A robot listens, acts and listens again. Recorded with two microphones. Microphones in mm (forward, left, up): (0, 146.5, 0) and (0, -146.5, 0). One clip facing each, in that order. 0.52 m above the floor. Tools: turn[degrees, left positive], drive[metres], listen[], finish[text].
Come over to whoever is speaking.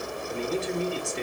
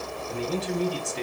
Thought: The man speaking: about 45° right or 135° right.
Action: turn[-45]
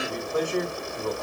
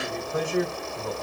Action: drive[1.0]
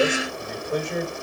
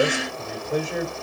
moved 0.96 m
Action: drive[1.0]
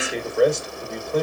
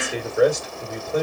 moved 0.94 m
Action: drive[1.0]
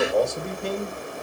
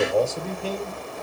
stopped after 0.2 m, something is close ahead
Action: finish[I am next to the man speaking.]